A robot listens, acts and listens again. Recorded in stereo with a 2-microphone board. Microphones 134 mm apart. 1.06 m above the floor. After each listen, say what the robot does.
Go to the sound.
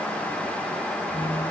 Turn 60° left.
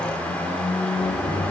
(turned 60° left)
Turn 60° left.
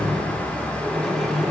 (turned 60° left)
Drive 1.0 m forward.
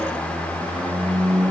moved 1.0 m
Drive 1.0 m forward.
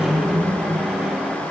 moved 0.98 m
Drive 1.0 m forward.
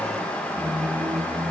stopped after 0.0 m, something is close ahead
Arrived at the squeak, straight ahead.